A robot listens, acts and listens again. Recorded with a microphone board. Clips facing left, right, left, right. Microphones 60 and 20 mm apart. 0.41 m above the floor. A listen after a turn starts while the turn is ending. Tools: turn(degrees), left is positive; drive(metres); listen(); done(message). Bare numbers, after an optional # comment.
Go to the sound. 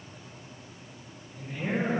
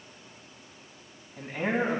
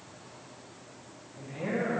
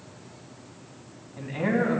# The man speaking: about 70° right or 110° right.
turn(-70)
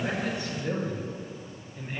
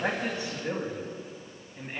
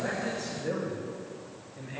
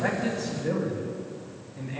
# So it is at 15° right.
turn(-15)
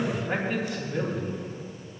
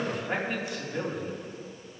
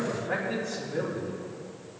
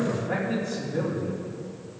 drive(1.0)
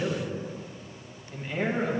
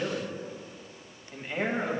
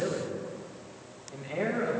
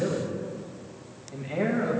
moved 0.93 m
# The man speaking is now 10° right.
turn(-10)
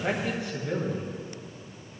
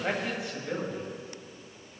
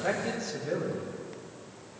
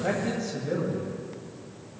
drive(1.0)
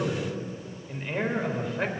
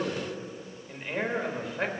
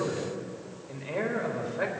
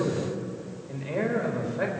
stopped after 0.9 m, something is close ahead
done("I am next to the man speaking.")